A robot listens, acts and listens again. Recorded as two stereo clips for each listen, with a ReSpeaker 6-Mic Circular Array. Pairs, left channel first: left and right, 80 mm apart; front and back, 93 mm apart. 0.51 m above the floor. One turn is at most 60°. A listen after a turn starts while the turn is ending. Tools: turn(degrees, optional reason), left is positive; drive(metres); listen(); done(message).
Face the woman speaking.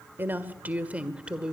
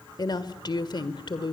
turn(degrees=-10, reason="The woman speaking: 10° right.")
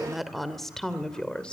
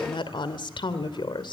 turn(degrees=15, reason="The woman speaking is now 15° left.")
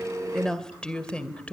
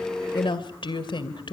turn(degrees=20, reason="The woman speaking is now 20° left.")
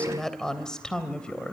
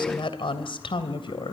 turn(degrees=15, reason="The woman speaking is now 15° left.")
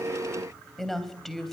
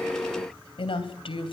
done("Facing the woman speaking, 2 to 4 m away.")